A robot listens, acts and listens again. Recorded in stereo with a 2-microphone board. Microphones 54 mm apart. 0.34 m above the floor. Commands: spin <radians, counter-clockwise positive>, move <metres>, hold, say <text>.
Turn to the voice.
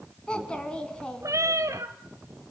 spin 0.26
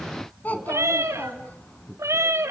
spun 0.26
spin 2.62
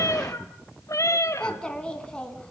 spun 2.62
spin 0.35
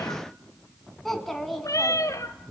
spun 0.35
say Found it: a child speaking, straight ahead.